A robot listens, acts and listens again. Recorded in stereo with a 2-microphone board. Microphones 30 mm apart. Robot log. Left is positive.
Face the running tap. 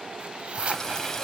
cmd yaw +30
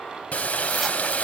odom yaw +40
note: So it is at 130° left.
cmd yaw +130
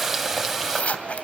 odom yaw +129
end: Facing the running tap.